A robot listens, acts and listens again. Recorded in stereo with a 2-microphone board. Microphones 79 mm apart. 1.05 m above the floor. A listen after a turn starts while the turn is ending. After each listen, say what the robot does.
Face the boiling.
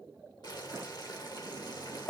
Turn 60° left.
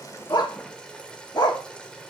Turn 15° left.
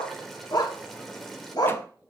Facing the boiling, 1 to 2 m away.